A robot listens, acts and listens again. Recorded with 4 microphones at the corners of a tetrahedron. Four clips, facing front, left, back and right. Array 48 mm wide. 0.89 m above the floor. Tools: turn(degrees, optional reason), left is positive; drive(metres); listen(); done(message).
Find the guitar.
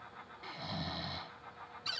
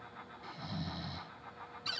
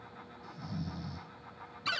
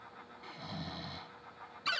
listen()
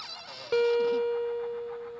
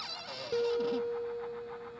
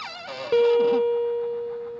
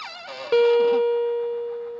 turn(degrees=-100, reason="The guitar: 100° right.")
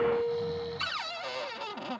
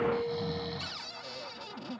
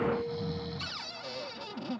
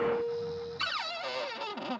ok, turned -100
turn(degrees=-10, reason="The guitar is now 10° right.")
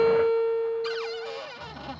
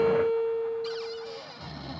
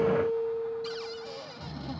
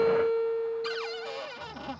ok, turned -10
done("Facing the guitar.")